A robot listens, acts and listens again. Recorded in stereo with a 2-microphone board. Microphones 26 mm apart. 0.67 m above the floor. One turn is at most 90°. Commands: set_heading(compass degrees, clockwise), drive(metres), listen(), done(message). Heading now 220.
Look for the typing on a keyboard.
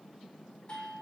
listen()
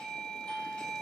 listen()
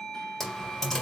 set_heading(190)
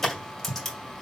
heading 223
set_heading(193)
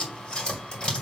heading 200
set_heading(110)
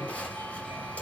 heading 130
set_heading(55)
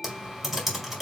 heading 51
done("Found it: typing on a keyboard, straight ahead.")